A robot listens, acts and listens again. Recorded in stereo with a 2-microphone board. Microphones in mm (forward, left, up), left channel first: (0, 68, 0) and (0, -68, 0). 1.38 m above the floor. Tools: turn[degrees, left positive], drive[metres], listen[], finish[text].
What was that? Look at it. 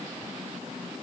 Action: listen[]
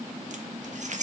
Thought: The keys jangling: about 60° right or 120° right.
Action: turn[-60]
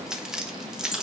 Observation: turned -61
Action: finish[Found it: keys jangling, straight ahead.]